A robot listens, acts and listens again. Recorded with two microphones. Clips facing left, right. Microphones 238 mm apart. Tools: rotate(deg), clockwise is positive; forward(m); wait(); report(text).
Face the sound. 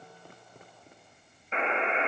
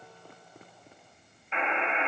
rotate(-40)
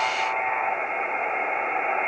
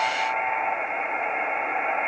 report("Facing the buzzer.")